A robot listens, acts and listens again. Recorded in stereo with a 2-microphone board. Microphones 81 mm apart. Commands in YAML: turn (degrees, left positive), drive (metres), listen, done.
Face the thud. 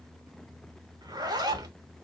listen: true
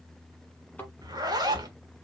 turn: 20
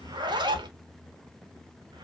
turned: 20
listen: true
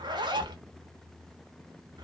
done: "I heard a thud, but can't make it out now. It was about straight ahead or 140° left."